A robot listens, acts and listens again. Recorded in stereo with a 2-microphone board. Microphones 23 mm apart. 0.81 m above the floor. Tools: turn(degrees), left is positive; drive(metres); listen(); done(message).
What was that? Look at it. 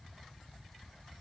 listen()
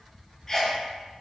turn(degrees=25)
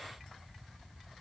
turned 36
listen()
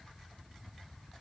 done("I heard a sneeze, but can't make it out now. It was about 10° right or 120° left.")